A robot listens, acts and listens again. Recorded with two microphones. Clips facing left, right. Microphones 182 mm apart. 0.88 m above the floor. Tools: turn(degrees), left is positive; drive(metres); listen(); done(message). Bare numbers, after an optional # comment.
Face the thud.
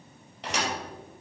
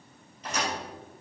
turn(90)
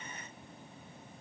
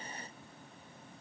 done("I heard a thud from this way, but can't make it out now.")